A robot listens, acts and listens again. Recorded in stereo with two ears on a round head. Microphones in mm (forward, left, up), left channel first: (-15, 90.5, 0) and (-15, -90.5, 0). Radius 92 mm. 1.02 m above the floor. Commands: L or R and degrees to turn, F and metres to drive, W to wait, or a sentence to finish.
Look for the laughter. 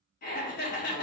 L45
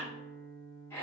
L15
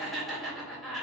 Found it: laughter, straight ahead.